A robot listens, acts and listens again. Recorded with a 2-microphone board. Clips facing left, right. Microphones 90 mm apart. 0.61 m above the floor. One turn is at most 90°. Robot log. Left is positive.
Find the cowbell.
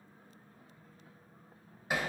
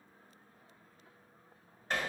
cmd idle
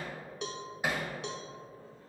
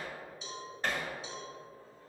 note: The cowbell: about 65° left or 115° left.
cmd yaw +65
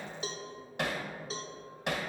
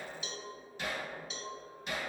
note: So it is at 40° left.
cmd yaw +40
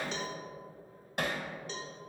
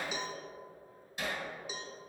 note: The cowbell is now 10° right.
cmd yaw -10
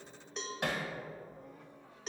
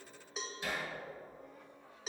end: Found it: a cowbell, straight ahead.